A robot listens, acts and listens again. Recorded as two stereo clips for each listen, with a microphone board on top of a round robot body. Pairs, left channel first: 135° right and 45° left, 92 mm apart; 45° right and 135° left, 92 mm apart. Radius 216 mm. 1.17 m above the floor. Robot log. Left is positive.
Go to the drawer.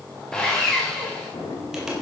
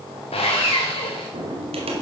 note: The drawer: 170° left.
cmd yaw +170
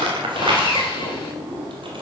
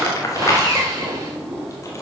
note: The drawer is now 55° left.
cmd yaw +55
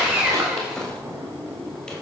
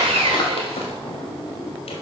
note: The drawer is now 10° right.
cmd yaw -10
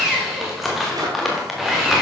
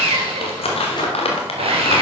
cmd idle
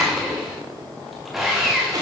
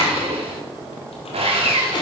cmd fwd 1.0
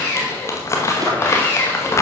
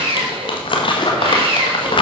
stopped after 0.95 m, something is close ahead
cmd idle
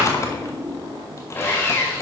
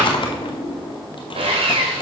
end: I am next to the drawer.